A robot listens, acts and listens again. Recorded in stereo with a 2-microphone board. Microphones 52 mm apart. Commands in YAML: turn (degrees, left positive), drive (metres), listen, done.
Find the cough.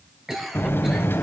turn: -30
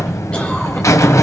listen: true
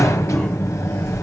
listen: true
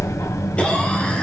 done: "I heard a cough, but can't make it out now. It was about 25° left or 145° right."